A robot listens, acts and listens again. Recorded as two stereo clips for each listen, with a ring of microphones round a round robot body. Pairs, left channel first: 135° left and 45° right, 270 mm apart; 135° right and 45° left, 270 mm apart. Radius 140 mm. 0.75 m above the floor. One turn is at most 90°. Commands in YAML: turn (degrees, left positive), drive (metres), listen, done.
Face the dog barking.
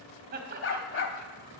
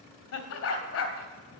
turn: 90
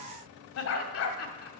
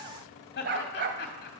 turn: 90
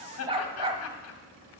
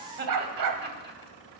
turn: 25
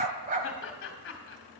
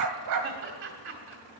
turn: 15
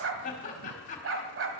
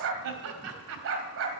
done: "Found it: a dog barking, straight ahead."